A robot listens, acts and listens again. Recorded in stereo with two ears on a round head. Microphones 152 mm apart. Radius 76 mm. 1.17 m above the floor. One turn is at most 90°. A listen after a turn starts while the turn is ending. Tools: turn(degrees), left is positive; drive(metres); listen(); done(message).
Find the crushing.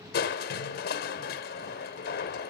turn(degrees=60)
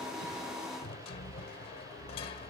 turn(degrees=40)
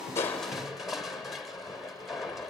done("Found it: crushing, straight ahead, 1 to 2 m away.")